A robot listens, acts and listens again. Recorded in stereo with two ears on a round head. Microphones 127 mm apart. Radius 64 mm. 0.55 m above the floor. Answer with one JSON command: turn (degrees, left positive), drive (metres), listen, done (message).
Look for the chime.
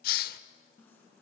{"turn": 30}
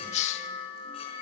{"turn": 140}
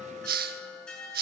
{"done": "Facing the chime."}